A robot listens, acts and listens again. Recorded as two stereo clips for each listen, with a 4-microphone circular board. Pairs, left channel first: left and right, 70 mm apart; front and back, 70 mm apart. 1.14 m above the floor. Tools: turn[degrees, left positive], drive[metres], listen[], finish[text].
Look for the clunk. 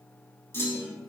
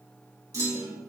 Thought: The clunk: 145° left.
Action: turn[145]
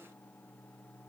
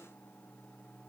Action: finish[I heard a clunk from this way, but can't make it out now.]